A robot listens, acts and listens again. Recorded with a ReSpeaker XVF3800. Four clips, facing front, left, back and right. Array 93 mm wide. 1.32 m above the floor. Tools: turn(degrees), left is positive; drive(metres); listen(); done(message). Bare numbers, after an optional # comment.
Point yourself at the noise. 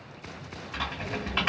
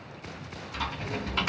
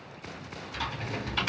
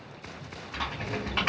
# The typing on a keyboard: 40° right.
turn(-40)
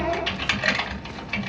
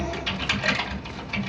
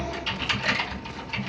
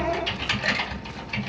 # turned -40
done("Found it: typing on a keyboard, straight ahead.")